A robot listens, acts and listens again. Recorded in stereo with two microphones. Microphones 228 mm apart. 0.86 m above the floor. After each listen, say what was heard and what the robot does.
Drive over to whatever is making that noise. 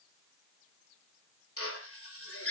The drill: about 75° left or 105° left. Turn 75° left.
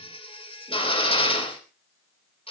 So it is at 25° left. Turn 25° left.
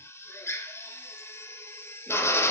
The drill is now 10° left. Turn 10° left.
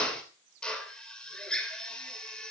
Drive 1.0 m forward.
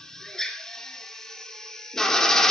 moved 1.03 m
Drive 1.0 m forward.
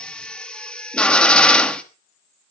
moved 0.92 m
Drive 1.0 m forward.
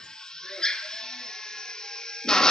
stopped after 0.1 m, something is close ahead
I am next to the drill.